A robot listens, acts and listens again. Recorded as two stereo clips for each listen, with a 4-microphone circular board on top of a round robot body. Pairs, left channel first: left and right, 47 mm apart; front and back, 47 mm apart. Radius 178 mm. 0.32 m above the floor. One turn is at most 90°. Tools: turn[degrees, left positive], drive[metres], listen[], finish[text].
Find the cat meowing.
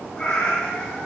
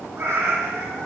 Thought: The cat meowing: 145° left.
Action: turn[90]
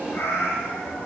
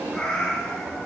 Thought: The cat meowing is now 60° left.
Action: turn[60]
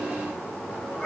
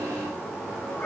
Action: listen[]
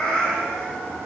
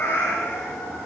Thought: The cat meowing is now 10° left.
Action: turn[10]
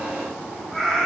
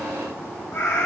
Action: finish[Found it: a cat meowing, straight ahead.]